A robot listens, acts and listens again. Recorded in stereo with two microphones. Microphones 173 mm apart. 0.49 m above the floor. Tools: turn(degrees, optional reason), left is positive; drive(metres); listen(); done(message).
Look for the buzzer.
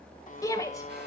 turn(degrees=50, reason="The buzzer: about 50° left or 130° left.")
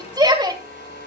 turn(degrees=85, reason="So it is at 85° left.")
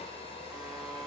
done("Found it: a buzzer, straight ahead, 1 to 2 m away.")